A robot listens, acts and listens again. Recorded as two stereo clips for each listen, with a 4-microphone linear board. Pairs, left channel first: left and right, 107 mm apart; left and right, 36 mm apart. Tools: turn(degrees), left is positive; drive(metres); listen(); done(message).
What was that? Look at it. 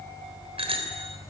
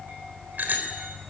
turn(degrees=-60)
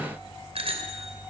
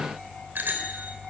turn(degrees=-60)
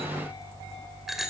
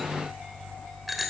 done("Found it: a bicycle bell, straight ahead, 2 to 4 m away.")